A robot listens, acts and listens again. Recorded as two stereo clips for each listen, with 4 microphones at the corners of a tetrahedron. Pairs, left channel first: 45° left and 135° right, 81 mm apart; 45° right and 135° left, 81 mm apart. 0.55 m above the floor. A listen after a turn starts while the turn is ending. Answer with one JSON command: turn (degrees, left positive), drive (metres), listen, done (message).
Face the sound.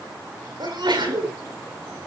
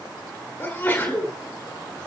{"turn": -115}
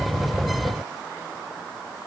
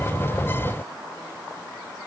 {"done": "I heard a sneeze from this way, but can't make it out now."}